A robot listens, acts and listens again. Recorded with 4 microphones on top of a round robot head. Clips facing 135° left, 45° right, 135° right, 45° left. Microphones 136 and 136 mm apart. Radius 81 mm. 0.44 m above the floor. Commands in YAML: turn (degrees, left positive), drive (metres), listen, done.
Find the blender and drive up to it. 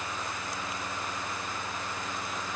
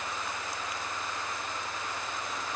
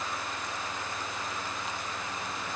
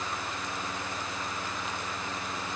listen: true
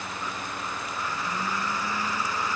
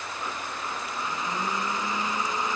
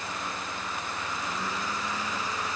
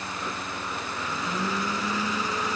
turn: 25
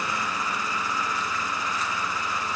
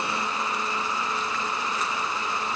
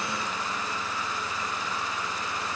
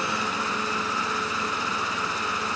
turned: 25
turn: 20
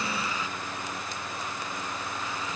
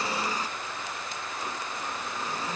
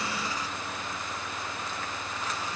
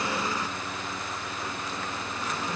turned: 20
turn: 10
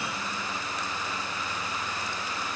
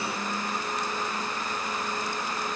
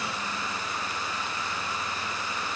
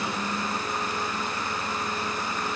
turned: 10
drive: 1.0
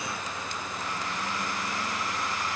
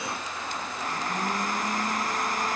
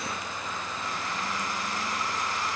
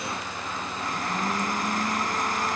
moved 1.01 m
drive: 1.0
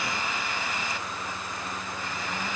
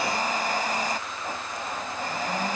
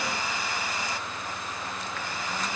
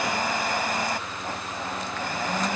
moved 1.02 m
drive: 1.0
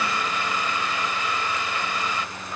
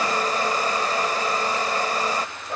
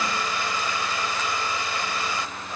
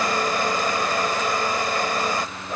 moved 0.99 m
drive: 1.0
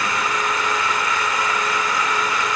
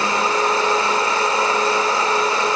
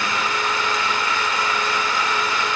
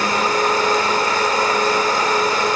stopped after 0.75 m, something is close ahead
done: "Arrived at the blender, straight ahead."